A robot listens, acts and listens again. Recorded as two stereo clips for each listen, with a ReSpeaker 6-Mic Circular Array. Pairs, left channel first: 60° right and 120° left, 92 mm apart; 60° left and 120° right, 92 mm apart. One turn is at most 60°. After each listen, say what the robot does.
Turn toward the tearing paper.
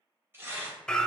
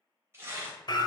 Turn 60° left.
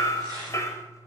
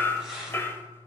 Turn 60° left.
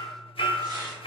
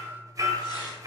Turn 60° left.
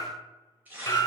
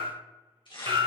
Turn 50° left.
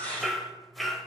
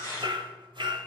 Turn 10° left.
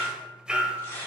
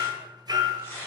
Found it: tearing paper, straight ahead, 2 to 4 m away.